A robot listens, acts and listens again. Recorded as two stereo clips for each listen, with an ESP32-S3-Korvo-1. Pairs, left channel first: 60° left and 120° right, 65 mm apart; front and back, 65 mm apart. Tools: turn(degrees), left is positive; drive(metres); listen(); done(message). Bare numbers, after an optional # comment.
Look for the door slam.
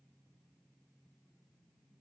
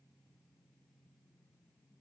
listen()
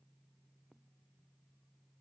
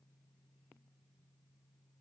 listen()
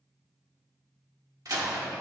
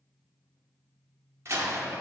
# The door slam: 135° right.
turn(-135)
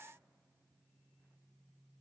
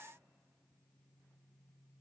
done("Facing where the door slam came from. I can't hear it now.")